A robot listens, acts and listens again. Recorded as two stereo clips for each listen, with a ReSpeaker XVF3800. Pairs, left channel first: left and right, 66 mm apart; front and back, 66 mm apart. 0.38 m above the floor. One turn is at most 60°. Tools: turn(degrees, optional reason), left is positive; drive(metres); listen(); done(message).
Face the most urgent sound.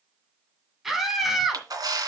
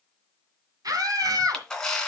turn(degrees=-60, reason="The scream: 175° right.")
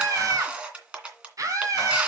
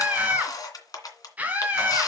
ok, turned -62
turn(degrees=-60, reason="The scream is now 115° right.")
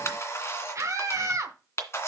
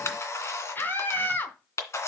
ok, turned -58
turn(degrees=-55, reason="The scream is now 55° right.")
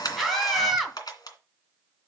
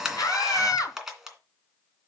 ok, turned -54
done("Found it: a scream, straight ahead.")